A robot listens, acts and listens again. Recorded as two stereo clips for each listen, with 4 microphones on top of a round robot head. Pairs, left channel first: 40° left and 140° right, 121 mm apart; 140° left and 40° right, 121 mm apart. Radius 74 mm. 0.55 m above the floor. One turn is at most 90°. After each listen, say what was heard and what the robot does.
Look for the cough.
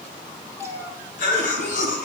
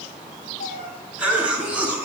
The cough: 35° left. Turn 35° left.
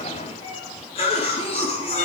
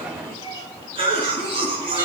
Facing the cough.